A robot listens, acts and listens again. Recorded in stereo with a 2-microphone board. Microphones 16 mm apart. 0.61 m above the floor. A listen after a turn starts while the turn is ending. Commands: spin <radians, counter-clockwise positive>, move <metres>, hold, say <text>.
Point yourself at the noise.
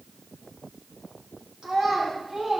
spin -1.57
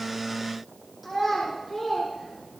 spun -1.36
say Found it: a child speaking, straight ahead, over 4 m away.